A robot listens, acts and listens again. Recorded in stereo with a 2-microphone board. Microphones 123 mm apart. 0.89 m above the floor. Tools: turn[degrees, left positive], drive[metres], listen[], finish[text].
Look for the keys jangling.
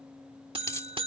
Thought: The keys jangling: about 25° left or 155° left.
Action: turn[25]
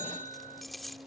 Action: finish[Facing the keys jangling.]